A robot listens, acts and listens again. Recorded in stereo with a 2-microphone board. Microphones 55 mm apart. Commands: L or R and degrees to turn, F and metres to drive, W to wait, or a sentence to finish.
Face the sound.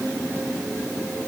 W
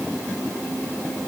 W
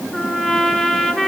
L30
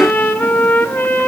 L140
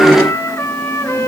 L55
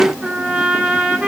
R20
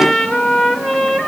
Found it: a trumpet, straight ahead, 1 to 2 m away.